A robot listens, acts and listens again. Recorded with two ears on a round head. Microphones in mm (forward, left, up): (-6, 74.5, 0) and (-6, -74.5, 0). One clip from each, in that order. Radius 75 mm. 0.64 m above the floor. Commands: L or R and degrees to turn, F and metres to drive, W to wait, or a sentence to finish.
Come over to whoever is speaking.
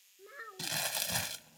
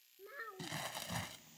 L30
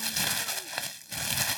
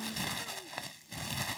W
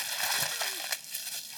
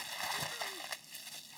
W
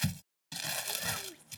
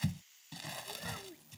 L140
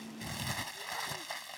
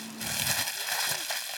W
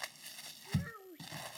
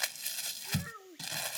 R20
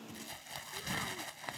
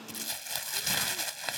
W
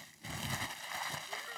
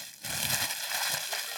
W
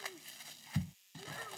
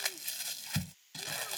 I heard a child speaking from this way, but can't make it out now. I did not reach it.